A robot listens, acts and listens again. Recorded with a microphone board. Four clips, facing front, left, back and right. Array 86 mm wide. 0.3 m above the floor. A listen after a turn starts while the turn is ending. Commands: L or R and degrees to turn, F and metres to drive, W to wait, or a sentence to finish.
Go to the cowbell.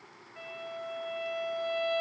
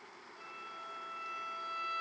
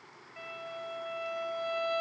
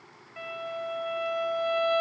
W
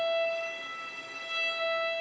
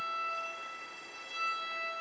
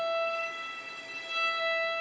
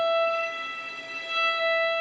W
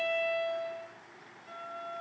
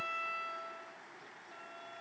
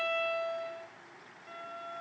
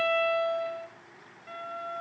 I can't make out a cowbell, only a violin.